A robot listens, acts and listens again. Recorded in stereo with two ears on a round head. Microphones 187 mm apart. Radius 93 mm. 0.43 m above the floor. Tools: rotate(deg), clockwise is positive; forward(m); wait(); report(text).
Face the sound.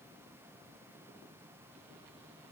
wait()
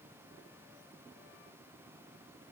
wait()
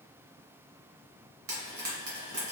rotate(45)
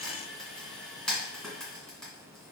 report("Facing the frying, 1 to 2 m away.")